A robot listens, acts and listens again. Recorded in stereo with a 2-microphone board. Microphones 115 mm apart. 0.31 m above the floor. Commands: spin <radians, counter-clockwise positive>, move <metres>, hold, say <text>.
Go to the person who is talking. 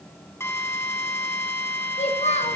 spin 1.22
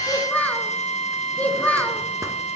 spin 0.26
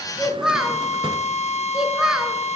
move 1.0
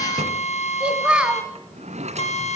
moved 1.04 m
spin -0.17
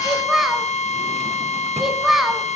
move 1.0
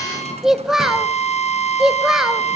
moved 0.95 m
move 1.0
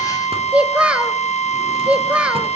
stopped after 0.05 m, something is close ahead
spin -0.17
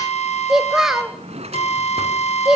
say I am next to the child speaking.